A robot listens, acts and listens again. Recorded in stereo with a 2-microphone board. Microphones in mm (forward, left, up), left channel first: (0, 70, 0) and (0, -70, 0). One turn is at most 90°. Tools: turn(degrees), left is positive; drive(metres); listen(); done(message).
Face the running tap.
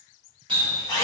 turn(degrees=-35)
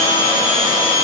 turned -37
listen()
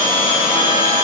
listen()
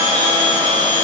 done("I heard a running tap, but can't make it out now. It was about 5° left or 110° right.")